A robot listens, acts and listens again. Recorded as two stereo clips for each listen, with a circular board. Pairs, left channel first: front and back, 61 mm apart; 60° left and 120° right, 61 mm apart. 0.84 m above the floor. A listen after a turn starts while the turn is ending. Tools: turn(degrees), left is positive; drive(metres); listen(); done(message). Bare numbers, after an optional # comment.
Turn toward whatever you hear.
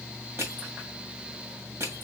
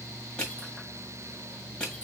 # The crushing: 135° left.
turn(135)
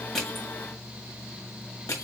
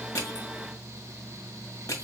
# The crushing is now 25° left.
turn(25)
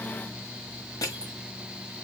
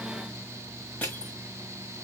done("Facing the crushing.")